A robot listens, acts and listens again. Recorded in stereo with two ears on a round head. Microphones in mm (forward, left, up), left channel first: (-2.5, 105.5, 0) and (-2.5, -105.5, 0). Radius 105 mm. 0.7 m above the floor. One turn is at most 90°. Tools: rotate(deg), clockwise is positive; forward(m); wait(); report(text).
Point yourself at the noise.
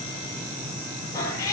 rotate(-15)
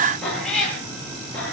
rotate(-30)
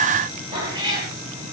rotate(20)
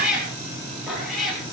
report("Found it: a cat meowing, straight ahead, over 4 m away.")